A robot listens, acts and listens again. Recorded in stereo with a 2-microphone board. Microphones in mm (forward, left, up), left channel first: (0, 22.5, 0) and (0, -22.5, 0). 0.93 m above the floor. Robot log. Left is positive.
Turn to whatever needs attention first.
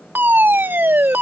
note: The fire alarm: about 50° right or 130° right.
cmd yaw -50
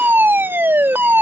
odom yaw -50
note: So it is at 65° right.
cmd yaw -65
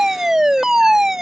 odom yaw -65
note: The fire alarm is now 10° right.
cmd yaw -10
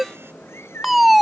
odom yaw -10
end: Facing the fire alarm.